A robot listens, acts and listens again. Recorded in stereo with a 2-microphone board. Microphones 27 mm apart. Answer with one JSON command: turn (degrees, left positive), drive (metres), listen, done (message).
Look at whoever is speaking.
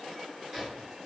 {"listen": true}
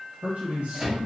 {"turn": -70}
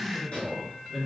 {"done": "Found it: a man speaking, straight ahead, 1 to 2 m away."}